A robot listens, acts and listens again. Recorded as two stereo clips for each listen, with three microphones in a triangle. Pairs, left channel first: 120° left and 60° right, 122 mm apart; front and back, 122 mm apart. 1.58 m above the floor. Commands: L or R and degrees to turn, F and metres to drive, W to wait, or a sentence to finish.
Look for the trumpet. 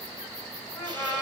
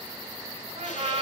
L175
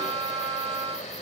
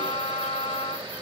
R45
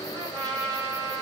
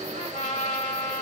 Facing the trumpet.